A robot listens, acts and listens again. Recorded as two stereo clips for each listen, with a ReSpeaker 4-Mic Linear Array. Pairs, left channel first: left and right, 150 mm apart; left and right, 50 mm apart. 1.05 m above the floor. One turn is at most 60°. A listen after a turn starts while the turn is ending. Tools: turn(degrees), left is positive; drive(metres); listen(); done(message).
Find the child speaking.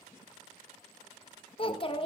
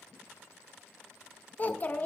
turn(degrees=35)
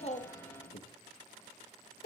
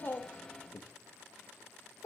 turn(degrees=60)
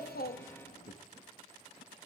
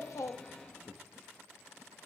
turn(degrees=60)
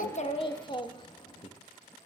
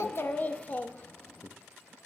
turn(degrees=30)
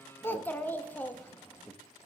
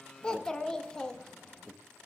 turn(degrees=10)
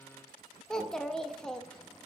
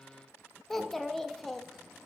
done("Found it: a child speaking, straight ahead, under 1 m away.")